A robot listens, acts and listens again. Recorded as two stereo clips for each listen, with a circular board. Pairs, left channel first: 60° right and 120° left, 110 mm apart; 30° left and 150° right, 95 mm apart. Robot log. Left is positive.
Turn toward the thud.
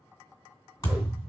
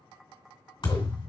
end: Found it: a thud, straight ahead.